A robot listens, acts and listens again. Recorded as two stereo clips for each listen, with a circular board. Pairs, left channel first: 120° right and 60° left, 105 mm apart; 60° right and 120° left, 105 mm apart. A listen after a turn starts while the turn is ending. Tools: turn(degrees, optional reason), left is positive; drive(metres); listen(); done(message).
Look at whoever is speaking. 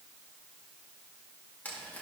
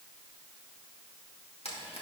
listen()
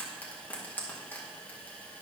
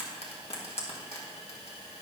listen()
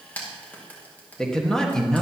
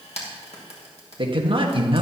turn(degrees=155, reason="The man speaking: 155° left.")
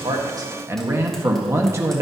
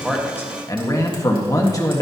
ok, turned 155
done("Found it: a man speaking, straight ahead.")